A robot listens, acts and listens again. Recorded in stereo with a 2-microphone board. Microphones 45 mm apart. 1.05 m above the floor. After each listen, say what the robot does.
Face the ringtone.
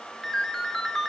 Turn 30° left.
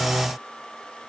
Keep listening.
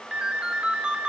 Turn 25° right.
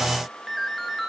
Found it: a ringtone, straight ahead, 1 to 2 m away.